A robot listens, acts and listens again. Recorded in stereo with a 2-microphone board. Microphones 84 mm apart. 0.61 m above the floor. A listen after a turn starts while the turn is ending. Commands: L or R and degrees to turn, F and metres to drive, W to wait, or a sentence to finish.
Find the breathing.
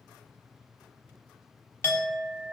W
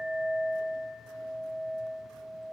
W
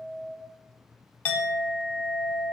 I can't make out breathing to turn to.